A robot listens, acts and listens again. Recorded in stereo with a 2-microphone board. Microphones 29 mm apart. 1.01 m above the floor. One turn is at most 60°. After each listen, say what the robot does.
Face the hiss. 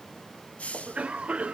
Turn 50° left.
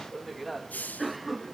Turn 60° left.
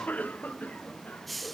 Facing the hiss.